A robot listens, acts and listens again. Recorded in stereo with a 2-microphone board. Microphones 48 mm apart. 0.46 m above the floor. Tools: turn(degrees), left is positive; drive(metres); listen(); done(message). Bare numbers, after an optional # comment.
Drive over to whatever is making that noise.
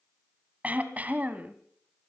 # The throat clearing: about 30° right or 150° right.
turn(-30)
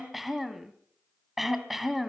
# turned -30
drive(1.0)
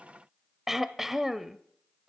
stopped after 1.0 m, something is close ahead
done("Arrived at the throat clearing, straight ahead.")